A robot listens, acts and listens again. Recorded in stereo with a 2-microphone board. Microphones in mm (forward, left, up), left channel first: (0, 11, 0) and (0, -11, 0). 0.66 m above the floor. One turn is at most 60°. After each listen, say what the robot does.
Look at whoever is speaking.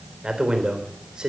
Turn 35° right.
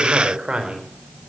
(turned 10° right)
Turn 40° right.
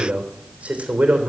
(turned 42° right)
Turn 60° right.
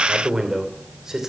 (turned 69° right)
Turn 25° right.
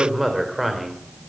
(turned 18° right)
Facing the man speaking.